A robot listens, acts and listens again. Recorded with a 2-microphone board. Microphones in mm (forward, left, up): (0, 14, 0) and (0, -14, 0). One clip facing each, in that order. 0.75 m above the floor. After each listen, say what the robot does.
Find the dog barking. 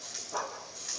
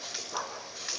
Turn 30° left.
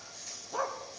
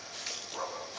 Turn 150° left.
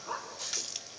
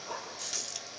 Turn 25° left.
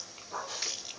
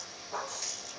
Found it: a dog barking, straight ahead.